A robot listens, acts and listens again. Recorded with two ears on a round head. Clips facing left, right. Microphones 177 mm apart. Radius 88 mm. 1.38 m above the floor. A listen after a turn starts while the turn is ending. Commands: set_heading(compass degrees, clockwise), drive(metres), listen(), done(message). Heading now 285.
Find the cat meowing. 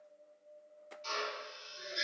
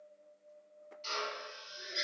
listen()
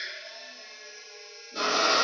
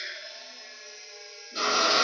listen()
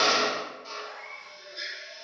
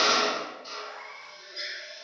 set_heading(250)
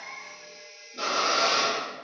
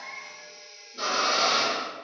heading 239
listen()
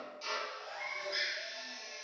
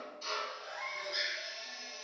done("Facing the cat meowing.")